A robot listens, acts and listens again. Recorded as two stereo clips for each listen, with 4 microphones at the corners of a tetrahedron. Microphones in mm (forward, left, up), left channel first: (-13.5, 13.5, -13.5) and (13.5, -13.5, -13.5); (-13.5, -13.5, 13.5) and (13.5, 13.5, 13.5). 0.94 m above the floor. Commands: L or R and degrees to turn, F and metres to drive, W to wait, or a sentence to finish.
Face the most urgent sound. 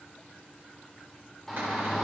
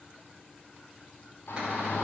R140
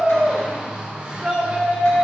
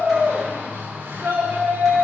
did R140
L20
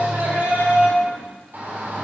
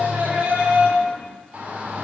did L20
Found it: a shout, straight ahead.